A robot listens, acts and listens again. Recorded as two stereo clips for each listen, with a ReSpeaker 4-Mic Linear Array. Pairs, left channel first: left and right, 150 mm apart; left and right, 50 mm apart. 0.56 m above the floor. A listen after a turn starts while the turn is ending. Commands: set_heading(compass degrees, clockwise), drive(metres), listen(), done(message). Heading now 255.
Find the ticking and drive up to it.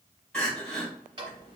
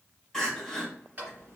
set_heading(290)
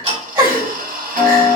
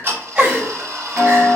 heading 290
set_heading(40)
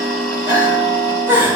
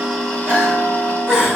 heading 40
set_heading(15)
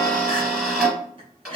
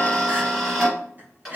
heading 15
drive(1.0)
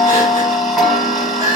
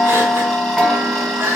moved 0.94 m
drive(1.0)
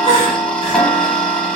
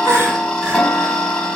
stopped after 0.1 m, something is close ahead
done("I am next to the ticking.")